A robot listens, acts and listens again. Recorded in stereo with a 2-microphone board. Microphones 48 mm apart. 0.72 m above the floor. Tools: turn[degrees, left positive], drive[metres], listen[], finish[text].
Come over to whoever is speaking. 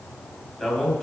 Action: turn[30]
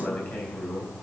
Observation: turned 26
Thought: So it is at 140° left.
Action: turn[140]
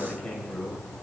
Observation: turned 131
Thought: The man speaking is now 10° left.
Action: turn[10]
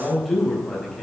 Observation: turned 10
Action: drive[1.0]
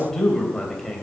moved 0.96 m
Action: drive[1.0]
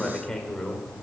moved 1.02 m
Thought: The man speaking is now 10° left.
Action: turn[10]
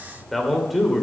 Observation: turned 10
Action: drive[1.0]
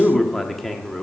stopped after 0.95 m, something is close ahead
Action: finish[Arrived at the man speaking, straight ahead.]